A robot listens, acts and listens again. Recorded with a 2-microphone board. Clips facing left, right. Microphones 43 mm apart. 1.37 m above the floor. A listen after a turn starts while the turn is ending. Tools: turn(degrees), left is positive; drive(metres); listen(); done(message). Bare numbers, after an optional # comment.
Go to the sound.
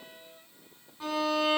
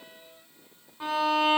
turn(-30)
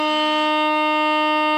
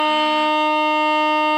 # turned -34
# So it is at 15° left.
turn(15)
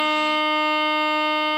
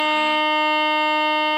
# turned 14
drive(1.0)
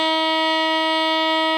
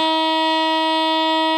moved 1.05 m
drive(1.0)
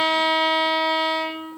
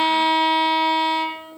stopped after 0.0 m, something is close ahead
done("Arrived at the violin, straight ahead.")